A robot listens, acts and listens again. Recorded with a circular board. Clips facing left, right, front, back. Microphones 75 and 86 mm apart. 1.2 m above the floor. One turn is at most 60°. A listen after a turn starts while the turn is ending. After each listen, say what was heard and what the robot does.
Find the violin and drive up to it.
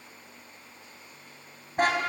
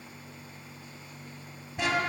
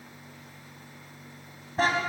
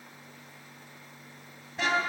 Keep listening.
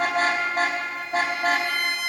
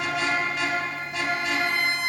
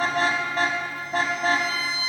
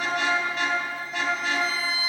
The violin: 30° right. Turn 30° right.
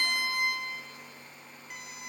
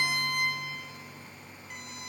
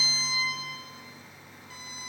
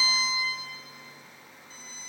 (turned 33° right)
Drive 1.0 m forward.
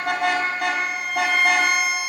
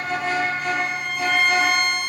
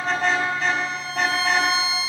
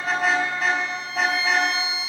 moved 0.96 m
Drive 1.0 m forward.
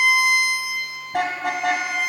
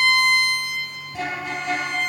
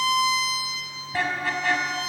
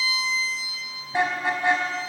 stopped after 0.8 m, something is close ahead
The violin is now 10° left. Turn 10° left.
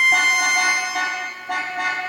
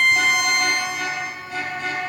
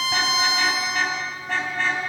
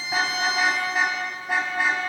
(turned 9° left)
I am next to the violin.